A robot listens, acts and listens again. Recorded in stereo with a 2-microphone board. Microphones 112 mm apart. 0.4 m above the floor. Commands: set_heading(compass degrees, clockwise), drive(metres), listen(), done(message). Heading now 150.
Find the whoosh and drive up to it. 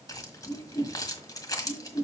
set_heading(80)
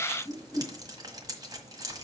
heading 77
set_heading(47)
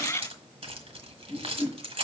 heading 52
drive(1.0)
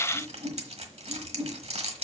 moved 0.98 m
set_heading(42)
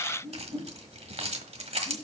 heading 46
drive(1.0)
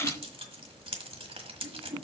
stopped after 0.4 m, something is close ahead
done("Something is in my way. I am facing the whoosh but have not reached it.")